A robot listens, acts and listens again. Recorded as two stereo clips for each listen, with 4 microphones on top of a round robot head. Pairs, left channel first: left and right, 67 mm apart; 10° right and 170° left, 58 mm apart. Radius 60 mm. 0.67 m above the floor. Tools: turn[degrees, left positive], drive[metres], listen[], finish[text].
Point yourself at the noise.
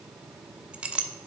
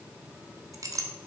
Thought: The clink: 165° right.
Action: turn[-165]
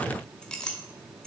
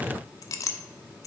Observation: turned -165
Thought: The clink is now 10° left.
Action: turn[10]
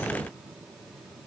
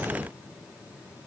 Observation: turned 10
Action: listen[]
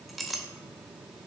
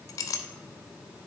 Action: finish[Found it: a clink, straight ahead, under 1 m away.]